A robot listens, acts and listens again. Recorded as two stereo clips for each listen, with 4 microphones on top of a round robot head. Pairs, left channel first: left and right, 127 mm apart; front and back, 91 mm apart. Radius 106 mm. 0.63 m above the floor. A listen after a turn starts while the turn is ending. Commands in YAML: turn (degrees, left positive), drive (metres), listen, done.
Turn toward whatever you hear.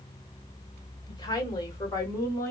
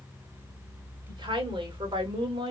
turn: 160
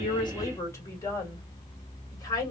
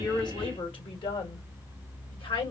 turn: 30
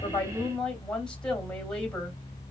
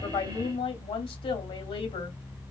done: "Found it: a woman speaking, straight ahead."